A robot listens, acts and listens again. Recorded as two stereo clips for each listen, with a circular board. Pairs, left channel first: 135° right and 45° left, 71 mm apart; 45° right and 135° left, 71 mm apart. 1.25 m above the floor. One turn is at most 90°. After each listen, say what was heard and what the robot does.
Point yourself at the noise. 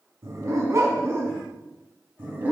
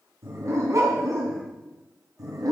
The dog barking: 105° left. Turn 90° left.
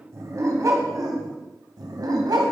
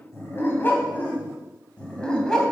The dog barking is now 35° left. Turn 35° left.
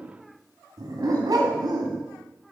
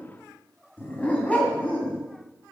The dog barking is now 25° left. Turn 25° left.
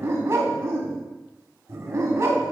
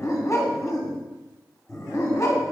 Found it: a dog barking, straight ahead.